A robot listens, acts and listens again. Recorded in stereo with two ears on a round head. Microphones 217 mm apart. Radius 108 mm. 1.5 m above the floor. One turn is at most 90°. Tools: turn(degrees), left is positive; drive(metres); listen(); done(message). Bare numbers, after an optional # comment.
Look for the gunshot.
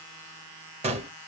# The gunshot: about 25° right or 155° right.
turn(-25)
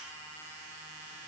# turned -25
listen()
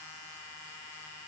done("I heard a gunshot, but can't make it out now. It was about straight ahead or 130° right.")